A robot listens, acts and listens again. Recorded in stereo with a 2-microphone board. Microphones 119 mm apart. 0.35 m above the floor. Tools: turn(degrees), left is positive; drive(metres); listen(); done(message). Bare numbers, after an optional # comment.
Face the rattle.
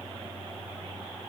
listen()
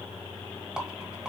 turn(-30)
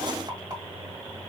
# So it is at 140° right.
turn(-140)
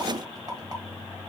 listen()
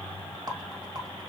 # The rattle is now 45° right.
turn(-45)
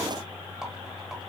listen()
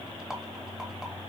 done("Found it: a rattle, straight ahead.")